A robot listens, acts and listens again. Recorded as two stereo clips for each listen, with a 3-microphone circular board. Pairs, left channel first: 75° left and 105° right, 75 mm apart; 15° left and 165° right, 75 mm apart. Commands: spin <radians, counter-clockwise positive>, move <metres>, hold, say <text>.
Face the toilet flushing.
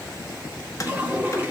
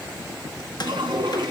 spin -2.97
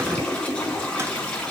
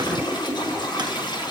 say Facing the toilet flushing, over 4 m away.